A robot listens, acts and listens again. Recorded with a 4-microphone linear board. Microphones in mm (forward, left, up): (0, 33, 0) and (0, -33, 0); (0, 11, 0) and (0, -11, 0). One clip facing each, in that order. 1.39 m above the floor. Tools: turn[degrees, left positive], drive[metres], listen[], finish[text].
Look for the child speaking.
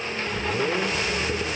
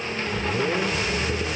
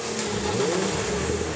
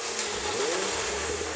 Action: listen[]
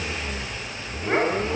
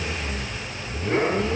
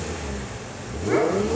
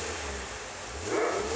Action: listen[]
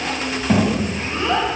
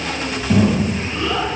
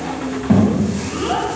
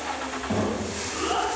Thought: The child speaking: about 30° left or 150° left.
Action: turn[30]
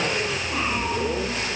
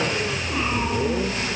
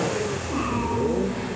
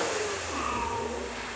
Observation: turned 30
Action: listen[]
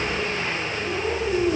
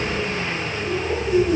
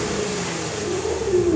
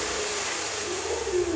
Action: finish[Facing the child speaking, over 4 m away.]